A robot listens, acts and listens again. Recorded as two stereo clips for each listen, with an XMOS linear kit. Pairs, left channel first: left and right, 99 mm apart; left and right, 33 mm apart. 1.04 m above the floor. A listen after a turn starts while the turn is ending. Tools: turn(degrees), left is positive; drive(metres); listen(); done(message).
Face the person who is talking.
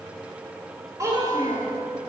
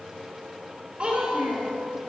turn(degrees=-35)
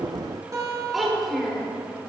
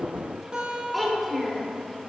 done("Facing the child speaking, 2 to 4 m away.")